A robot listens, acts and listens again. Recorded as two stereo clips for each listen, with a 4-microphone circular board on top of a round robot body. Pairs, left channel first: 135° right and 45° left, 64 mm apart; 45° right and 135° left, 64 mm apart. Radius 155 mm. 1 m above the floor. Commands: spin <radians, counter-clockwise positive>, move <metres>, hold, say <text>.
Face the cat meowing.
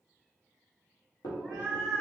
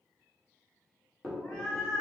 spin -1.40
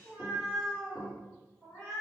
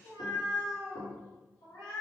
spin -0.96
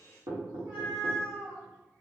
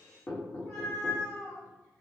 say Found it: a cat meowing, straight ahead.